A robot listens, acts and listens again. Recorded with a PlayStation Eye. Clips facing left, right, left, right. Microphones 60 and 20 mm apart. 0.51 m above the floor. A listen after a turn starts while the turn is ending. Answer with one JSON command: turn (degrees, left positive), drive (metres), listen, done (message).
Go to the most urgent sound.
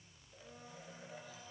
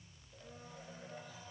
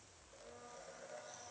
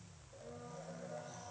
{"listen": true}
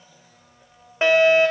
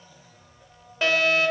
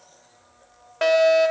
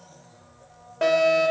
{"turn": 25}
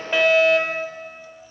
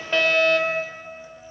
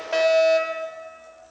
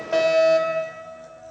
{"drive": 1.0}
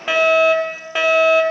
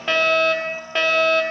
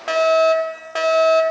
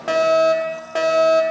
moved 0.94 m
{"turn": 10}
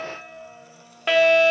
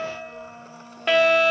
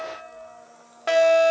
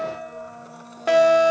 {"drive": 1.0}
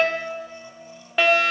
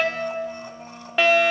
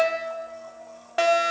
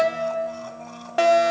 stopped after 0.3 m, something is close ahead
{"done": "I am next to the fire alarm."}